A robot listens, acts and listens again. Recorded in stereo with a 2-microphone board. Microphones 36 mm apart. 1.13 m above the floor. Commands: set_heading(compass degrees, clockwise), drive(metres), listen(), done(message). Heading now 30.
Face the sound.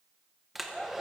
set_heading(60)
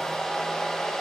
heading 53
set_heading(38)
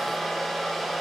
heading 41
done("Facing the hair dryer.")